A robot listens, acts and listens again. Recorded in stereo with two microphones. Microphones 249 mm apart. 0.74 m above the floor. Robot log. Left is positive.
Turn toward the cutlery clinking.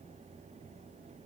cmd idle
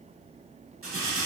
note: The cutlery clinking: about 60° right or 120° right.
cmd yaw -60
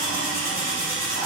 note: So it is at 55° right.
cmd yaw -55
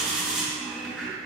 end: Facing the cutlery clinking.